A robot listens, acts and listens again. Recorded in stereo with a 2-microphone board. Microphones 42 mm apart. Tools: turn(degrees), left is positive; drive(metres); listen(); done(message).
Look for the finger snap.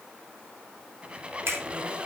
turn(degrees=-75)
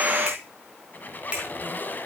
turn(degrees=-25)
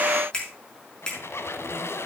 turn(degrees=20)
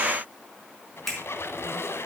turn(degrees=10)
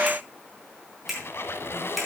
done("Facing the finger snap, over 4 m away.")